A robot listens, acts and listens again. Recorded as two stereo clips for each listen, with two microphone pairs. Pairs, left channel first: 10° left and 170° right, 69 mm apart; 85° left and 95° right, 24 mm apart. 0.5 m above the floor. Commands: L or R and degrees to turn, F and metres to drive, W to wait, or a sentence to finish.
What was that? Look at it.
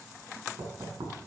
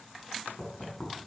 L180
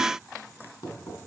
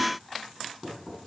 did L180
R15
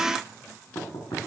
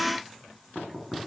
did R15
Found it: knocking, straight ahead, over 4 m away.